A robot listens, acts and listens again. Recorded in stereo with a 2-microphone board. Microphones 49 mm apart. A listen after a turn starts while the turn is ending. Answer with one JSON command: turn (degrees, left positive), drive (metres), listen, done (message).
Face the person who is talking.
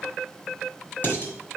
{"listen": true}
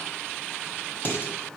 {"listen": true}
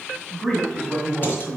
{"turn": -30}
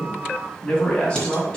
{"turn": 25}
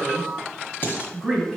{"done": "Facing the man speaking."}